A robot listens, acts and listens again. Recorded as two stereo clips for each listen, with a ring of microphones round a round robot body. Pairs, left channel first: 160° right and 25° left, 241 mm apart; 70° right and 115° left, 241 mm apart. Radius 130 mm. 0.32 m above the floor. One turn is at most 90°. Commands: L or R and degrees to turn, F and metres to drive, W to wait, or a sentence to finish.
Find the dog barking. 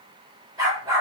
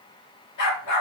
R55
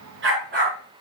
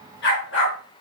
R25
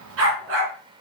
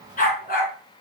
R15
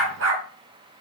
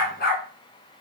R15
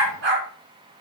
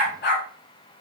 R20
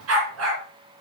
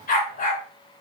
R10
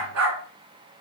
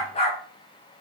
Facing the dog barking.